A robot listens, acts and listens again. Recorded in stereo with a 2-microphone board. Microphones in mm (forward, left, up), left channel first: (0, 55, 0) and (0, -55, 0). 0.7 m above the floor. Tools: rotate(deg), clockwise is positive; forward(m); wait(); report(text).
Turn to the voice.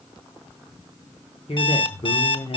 rotate(-60)
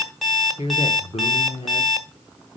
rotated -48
rotate(-65)
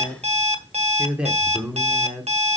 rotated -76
rotate(10)
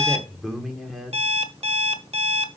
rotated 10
report("Facing the man speaking.")